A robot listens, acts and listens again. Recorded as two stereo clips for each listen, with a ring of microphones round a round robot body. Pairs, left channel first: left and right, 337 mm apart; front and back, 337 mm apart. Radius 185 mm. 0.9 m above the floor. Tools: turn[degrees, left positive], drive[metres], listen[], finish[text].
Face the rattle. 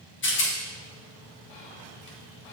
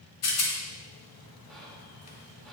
Thought: The rattle: 35° left.
Action: turn[35]
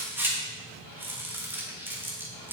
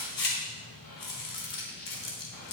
Action: finish[Facing the rattle.]